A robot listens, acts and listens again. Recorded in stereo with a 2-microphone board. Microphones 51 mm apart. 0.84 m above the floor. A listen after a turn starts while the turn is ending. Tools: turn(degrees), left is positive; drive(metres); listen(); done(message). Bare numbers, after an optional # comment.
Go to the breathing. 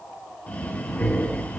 # The breathing: about 30° left or 150° left.
turn(30)
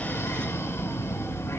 # So it is at 120° left.
turn(120)
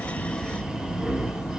# The breathing is now 15° right.
turn(-15)
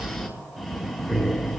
drive(1.0)
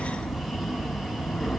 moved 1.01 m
drive(1.0)
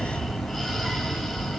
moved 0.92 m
drive(1.0)
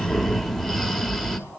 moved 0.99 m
drive(1.0)
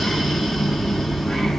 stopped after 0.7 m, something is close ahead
done("I am next to the breathing.")